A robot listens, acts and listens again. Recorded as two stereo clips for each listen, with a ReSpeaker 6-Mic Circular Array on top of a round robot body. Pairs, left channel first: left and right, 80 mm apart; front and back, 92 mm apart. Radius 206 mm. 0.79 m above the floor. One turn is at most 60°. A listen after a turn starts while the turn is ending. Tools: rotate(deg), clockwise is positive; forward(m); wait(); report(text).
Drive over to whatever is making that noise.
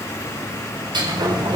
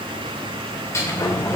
rotate(60)
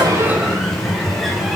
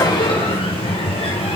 forward(1.0)
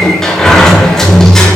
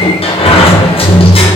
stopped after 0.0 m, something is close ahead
report("Something is in my way. I am facing the sliding door but have not reached it.")